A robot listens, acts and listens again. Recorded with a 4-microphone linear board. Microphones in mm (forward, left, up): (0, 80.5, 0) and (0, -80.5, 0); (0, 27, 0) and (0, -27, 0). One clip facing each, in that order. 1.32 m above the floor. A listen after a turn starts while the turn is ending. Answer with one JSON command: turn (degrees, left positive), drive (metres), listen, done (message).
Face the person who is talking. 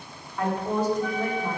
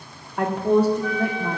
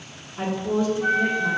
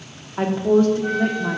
{"turn": -65}
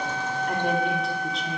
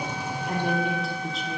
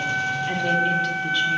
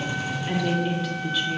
{"listen": true}
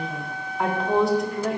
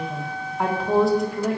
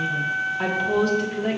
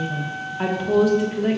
{"done": "Found it: a woman speaking, straight ahead, 1 to 2 m away."}